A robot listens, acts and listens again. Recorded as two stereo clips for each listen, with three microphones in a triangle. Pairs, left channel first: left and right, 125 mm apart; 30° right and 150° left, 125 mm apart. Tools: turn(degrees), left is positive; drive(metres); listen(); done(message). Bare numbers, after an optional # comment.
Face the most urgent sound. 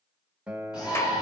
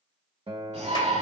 # The shout: 145° left.
turn(145)
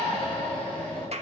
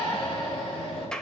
# The shout is now 10° left.
turn(10)
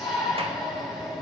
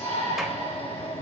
done("Found it: a shout, straight ahead.")